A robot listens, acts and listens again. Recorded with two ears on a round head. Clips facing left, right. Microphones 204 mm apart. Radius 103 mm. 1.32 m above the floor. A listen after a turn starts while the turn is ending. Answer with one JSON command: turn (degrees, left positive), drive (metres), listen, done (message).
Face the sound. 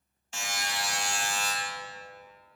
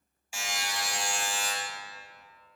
{"turn": -30}
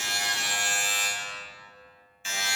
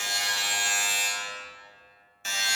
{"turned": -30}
{"turn": -140}
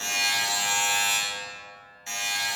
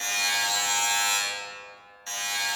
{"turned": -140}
{"turn": 15}
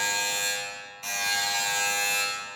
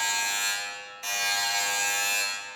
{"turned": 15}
{"done": "Facing the buzzer."}